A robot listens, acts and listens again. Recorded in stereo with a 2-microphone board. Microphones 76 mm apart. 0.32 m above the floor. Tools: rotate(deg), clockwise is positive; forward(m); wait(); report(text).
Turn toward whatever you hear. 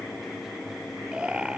rotate(15)
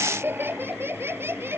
rotate(35)
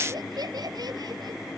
rotate(110)
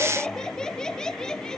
rotate(-10)
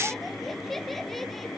report("Found it: laughter, straight ahead.")